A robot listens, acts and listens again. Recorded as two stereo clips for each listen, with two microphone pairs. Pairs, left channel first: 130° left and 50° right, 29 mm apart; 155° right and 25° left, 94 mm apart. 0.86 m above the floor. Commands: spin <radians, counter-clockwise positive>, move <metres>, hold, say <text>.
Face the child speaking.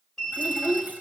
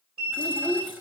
spin -0.17
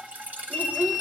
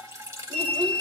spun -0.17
hold
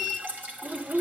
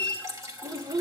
spin -0.35
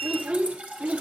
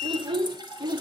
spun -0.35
spin -0.44
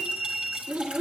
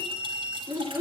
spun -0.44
spin -0.61
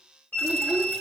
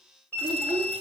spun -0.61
spin -0.35
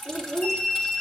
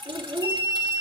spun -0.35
say Found it: a child speaking, straight ahead.